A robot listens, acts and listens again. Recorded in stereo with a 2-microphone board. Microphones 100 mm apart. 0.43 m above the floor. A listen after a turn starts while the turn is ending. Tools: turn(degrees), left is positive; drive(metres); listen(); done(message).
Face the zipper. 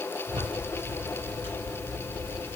turn(degrees=-50)
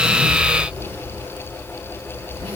turn(degrees=-80)
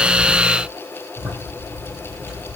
done("Facing the zipper, over 4 m away.")